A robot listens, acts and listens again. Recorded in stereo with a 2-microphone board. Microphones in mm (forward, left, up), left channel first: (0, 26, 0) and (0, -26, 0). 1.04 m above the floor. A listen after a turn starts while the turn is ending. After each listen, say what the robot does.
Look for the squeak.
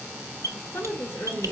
Turn 90° right.
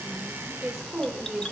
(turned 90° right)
Turn 15° left.
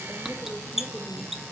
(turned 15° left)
Facing the squeak, under 1 m away.